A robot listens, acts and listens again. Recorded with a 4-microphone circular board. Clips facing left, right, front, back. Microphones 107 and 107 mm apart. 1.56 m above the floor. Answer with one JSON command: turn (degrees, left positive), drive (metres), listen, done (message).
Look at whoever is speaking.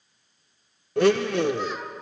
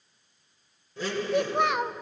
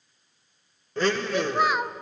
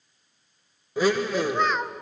{"turn": -85}
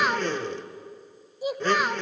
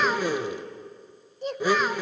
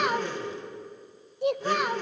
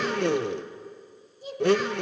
{"turn": 10}
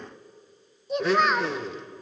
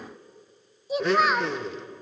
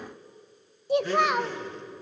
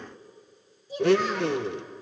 {"done": "Found it: a child speaking, straight ahead, under 1 m away."}